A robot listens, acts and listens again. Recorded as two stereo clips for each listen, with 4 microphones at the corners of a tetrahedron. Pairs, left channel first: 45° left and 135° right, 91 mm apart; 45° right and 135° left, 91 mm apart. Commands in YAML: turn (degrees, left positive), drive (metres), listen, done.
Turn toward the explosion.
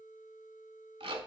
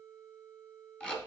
listen: true
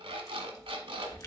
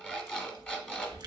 listen: true
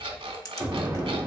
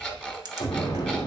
turn: -70
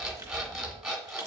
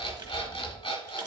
done: "I heard an explosion from this way, but can't make it out now."